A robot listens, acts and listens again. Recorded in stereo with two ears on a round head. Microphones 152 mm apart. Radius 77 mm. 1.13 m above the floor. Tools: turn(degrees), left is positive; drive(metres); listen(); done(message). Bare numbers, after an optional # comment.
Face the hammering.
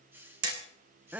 # The hammering: about 65° right or 115° right.
turn(-65)
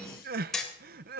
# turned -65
done("Found it: hammering, straight ahead.")